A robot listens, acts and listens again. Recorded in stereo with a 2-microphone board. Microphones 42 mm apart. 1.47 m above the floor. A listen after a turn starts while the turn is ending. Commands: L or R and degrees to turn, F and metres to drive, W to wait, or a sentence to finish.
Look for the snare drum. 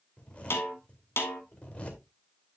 L90
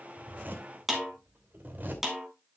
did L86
R10
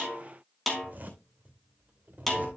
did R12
Facing the snare drum.